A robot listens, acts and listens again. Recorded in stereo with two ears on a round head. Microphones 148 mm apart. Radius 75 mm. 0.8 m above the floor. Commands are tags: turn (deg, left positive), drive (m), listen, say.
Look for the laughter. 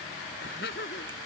<turn deg="65"/>
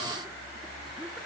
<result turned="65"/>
<listen/>
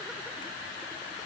<listen/>
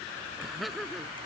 <say>Facing the laughter.</say>